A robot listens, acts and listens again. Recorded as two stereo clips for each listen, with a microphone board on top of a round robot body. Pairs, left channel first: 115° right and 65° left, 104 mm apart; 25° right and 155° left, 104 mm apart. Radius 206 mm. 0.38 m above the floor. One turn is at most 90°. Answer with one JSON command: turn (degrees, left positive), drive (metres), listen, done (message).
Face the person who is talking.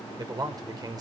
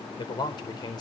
{"turn": 20}
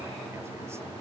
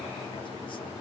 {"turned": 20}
{"listen": true}
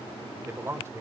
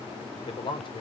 {"done": "Facing the man speaking."}